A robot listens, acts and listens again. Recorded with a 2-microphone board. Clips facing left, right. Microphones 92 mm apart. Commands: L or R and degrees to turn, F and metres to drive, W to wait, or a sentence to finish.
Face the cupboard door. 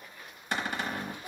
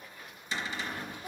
L55
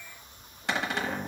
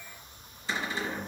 L70
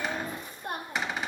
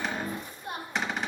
Facing the cupboard door.